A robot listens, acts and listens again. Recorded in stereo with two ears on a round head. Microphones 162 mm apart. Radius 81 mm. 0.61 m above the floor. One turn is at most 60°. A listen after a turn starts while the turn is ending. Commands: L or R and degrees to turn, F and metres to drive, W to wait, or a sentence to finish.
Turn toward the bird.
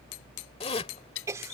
L60
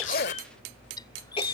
L20
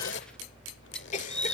Found it: a bird, straight ahead.